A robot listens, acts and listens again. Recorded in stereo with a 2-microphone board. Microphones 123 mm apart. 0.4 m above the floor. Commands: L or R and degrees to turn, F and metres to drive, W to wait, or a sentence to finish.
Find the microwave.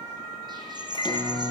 L40
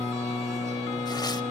L100
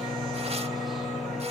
Found it: a microwave, straight ahead, over 4 m away.